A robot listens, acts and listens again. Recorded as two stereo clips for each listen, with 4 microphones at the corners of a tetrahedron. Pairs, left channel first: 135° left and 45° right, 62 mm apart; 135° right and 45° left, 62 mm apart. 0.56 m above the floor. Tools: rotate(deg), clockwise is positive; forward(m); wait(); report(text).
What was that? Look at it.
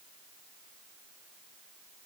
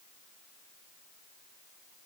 wait()
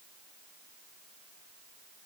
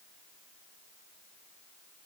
wait()
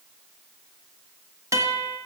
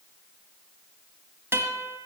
report("Found it: a guitar, straight ahead.")